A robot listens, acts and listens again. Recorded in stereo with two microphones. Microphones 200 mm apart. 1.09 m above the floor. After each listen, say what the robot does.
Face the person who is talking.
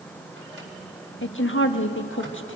Turn 90° left.
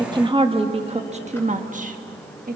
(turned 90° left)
Turn 45° right.
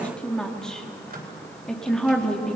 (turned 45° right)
Facing the woman speaking, 1 to 2 m away.